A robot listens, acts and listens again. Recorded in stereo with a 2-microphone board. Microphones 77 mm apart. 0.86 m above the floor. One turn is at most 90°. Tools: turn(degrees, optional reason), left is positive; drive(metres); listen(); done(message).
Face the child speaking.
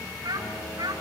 turn(degrees=-90)
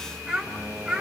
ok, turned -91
done("Found it: a child speaking, straight ahead.")